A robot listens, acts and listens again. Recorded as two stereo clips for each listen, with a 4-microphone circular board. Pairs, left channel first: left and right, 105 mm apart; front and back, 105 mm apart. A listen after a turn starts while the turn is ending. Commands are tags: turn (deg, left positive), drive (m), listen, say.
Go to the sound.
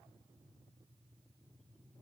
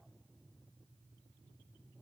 <listen/>
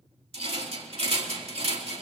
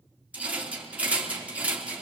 <turn deg="-105"/>
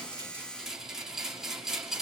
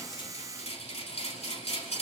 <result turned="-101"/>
<drive m="1.0"/>
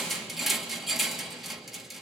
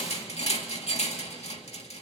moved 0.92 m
<drive m="1.0"/>
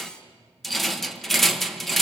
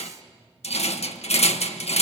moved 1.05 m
<drive m="1.0"/>
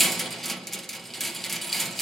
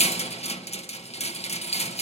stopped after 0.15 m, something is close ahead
<say>I am next to the rattle.</say>